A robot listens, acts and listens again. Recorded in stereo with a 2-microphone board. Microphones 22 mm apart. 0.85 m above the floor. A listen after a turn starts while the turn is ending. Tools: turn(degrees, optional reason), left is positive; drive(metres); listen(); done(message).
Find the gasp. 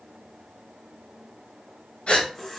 turn(degrees=60, reason="The gasp: about 60° left or 120° left.")
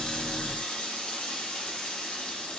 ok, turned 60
listen()
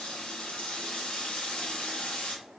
done("I heard a gasp, but can't make it out now. It was about straight ahead or 60° left.")